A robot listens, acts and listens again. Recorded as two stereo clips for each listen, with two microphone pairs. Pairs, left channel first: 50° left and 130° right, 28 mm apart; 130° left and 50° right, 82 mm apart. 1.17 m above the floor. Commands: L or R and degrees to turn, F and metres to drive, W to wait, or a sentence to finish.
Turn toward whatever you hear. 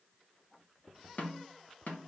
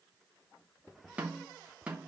L25
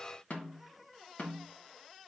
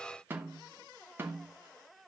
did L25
L15
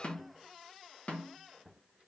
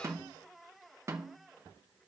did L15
Facing the snare drum, 2 to 4 m away.